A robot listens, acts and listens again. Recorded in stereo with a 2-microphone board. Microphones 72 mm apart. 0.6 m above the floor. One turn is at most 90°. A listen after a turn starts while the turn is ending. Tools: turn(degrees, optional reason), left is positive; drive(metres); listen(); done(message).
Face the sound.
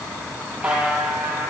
turn(degrees=-15, reason="The buzzer: about 15° right or 165° right.")
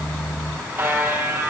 turn(degrees=-90, reason="So it is at 150° right.")
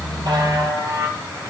turn(degrees=-75, reason="The buzzer is now 75° right.")
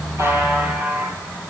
turn(degrees=-25, reason="The buzzer is now 25° right.")
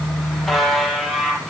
done("Facing the buzzer, over 4 m away.")